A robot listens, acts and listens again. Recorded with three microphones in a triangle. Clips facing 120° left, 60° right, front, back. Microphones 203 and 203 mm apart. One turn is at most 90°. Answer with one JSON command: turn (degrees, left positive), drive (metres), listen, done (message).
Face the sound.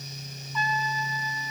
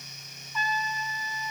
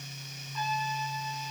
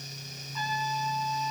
{"turn": 15}
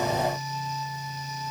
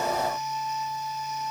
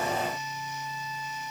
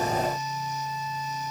{"done": "Found it: a trumpet, straight ahead."}